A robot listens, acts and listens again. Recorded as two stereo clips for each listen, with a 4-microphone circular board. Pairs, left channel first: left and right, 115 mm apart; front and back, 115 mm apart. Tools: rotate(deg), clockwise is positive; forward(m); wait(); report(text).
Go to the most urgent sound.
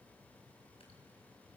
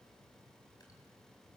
wait()
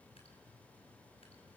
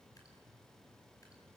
wait()
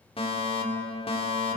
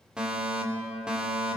rotate(-100)
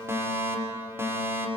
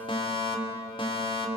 rotate(25)
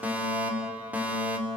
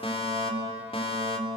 rotate(15)
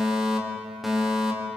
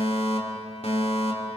forward(1.0)
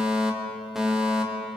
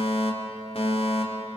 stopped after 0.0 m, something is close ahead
report("Blocked. The fire alarm is further on, straight ahead.")